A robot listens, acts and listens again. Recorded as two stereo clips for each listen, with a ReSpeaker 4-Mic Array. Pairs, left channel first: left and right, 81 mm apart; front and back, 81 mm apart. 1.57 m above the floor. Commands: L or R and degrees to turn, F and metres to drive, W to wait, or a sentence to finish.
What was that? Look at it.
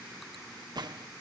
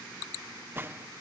R120
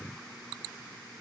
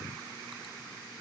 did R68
R50
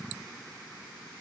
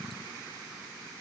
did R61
L10
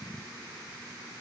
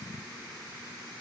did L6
I heard a gunshot from this way, but can't make it out now.